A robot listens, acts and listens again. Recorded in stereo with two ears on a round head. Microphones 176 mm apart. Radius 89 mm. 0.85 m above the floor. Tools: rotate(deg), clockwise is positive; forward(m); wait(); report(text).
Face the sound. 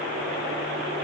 wait()
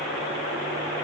wait()
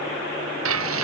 rotate(90)
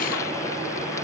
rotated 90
wait()
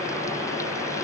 wait()
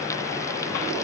report("I heard frying from this way, but can't make it out now.")